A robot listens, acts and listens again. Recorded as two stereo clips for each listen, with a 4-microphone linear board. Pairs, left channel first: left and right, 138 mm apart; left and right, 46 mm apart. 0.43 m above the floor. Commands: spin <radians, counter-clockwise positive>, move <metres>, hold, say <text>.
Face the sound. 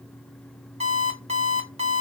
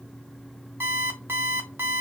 spin -0.96
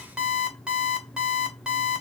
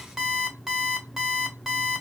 say Found it: an alarm clock, straight ahead, 1 to 2 m away.